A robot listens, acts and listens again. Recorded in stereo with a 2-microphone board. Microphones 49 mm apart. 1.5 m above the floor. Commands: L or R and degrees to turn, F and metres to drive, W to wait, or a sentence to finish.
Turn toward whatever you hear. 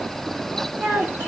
R55
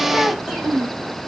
R10
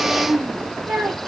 R15
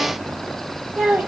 R20
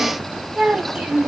R15
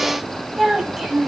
Found it: a child speaking, straight ahead.